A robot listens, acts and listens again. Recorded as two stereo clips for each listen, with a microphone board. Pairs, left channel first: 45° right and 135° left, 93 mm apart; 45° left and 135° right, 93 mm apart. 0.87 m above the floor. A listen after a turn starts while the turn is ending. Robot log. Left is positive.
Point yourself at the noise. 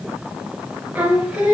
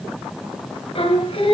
note: The singing: 55° left.
cmd yaw +55
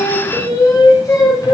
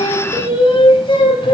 note: The singing is now 10° left.
cmd yaw +10
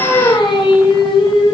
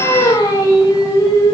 note: The singing is now 10° right.
cmd yaw -10
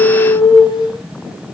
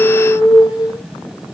end: Facing the singing.